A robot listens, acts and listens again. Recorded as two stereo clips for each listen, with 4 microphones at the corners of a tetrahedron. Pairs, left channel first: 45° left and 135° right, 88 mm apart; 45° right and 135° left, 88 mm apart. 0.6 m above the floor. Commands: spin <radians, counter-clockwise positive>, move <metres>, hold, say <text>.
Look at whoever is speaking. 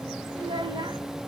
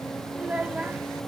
spin -2.71
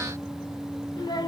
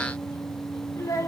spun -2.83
spin 0.17
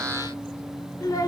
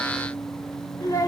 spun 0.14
say Facing the child speaking.